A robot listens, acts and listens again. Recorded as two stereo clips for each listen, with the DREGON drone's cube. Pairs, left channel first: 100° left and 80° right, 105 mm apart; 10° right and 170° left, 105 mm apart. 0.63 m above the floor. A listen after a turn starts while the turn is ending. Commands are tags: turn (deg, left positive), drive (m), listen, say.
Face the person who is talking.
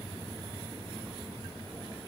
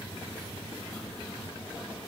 <listen/>
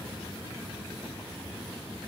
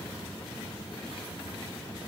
<listen/>
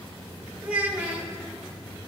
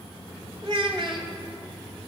<turn deg="-155"/>
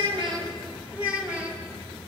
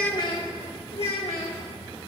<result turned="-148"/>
<say>Found it: a child speaking, straight ahead, 1 to 2 m away.</say>